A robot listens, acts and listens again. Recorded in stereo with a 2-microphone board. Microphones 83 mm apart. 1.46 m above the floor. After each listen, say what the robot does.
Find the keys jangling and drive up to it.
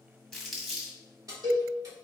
Turn 50° right.
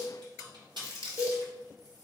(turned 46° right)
Turn 80° right.
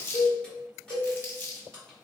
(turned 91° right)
Turn 10° left.
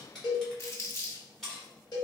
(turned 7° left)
Drive 1.0 m forward.
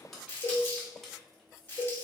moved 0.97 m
Drive 1.0 m forward.
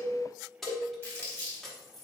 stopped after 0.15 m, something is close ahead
Arrived at the keys jangling, straight ahead.